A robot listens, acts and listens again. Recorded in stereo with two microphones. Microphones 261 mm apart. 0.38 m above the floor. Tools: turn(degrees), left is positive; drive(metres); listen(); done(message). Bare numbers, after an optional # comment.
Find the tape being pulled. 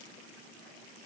listen()
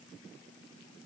listen()
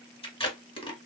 # The tape being pulled: about 20° left or 160° left.
turn(20)
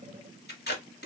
# So it is at 140° left.
turn(140)
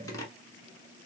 listen()
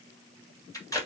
# The tape being pulled is now 10° left.
turn(10)
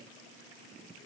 listen()
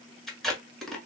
done("Found it: tape being pulled, straight ahead.")